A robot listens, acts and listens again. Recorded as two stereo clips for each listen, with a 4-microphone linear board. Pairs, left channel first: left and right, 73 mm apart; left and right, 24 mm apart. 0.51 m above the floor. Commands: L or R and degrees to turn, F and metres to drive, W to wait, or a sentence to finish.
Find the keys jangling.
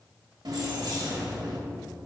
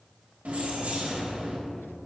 R70
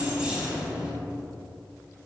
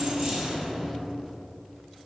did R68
R15
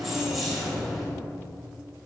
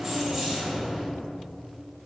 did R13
Found it: keys jangling, straight ahead, 1 to 2 m away.